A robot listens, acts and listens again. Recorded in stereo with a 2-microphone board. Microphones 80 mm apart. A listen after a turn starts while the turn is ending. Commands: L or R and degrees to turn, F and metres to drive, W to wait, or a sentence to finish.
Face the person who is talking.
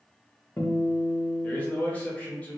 L20
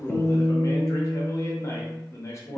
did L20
L135
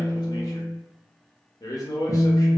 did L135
L55
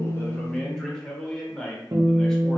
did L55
L10
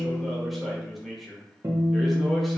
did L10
Facing the man speaking, under 1 m away.